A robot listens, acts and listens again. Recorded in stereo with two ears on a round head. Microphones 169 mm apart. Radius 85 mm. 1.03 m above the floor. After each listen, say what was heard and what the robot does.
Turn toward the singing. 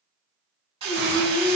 Turn 90° left.
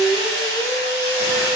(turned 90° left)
So it is at 10° left. Turn 10° left.
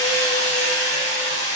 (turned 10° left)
Keep listening.
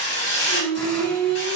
The singing is now 30° left. Turn 30° left.
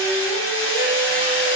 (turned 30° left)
Keep listening.
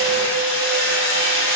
Keep listening.
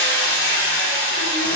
I heard singing from this way, but can't make it out now.